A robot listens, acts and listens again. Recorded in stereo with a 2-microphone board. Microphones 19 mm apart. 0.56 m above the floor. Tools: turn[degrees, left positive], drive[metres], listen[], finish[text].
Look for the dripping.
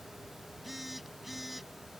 Action: listen[]
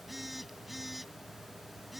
Action: listen[]
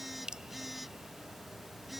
Thought: The dripping: about 50° right or 130° right.
Action: turn[-50]
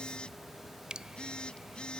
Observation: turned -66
Thought: So it is at 60° right.
Action: turn[-60]
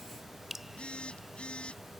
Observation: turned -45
Thought: The dripping is now 15° right.
Action: turn[-15]
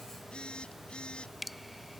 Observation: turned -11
Action: finish[Facing the dripping.]